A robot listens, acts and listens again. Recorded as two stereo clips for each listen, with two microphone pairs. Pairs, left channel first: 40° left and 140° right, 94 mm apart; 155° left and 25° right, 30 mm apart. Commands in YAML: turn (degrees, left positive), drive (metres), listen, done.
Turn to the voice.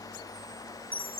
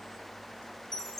listen: true
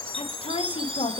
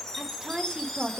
turn: 40
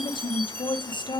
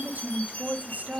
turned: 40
done: "Found it: a woman speaking, straight ahead."